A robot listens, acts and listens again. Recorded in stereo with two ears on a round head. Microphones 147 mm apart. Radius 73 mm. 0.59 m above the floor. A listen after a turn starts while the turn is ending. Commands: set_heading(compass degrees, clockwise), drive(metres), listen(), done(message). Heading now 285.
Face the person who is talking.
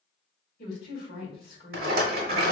set_heading(225)
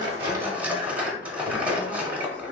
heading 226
listen()
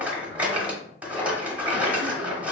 listen()
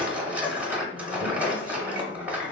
done("I heard a woman speaking, but can't make it out now. It was about straight ahead or 60° left.")